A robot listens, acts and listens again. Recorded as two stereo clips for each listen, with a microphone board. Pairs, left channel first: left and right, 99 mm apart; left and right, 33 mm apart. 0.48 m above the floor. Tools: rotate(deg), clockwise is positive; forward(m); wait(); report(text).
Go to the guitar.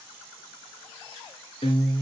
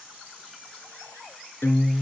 rotate(-65)
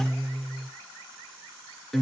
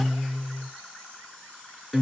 forward(1.0)
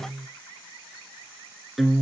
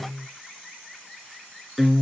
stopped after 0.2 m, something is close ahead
report("Something is in my way. I am facing the guitar but have not reached it.")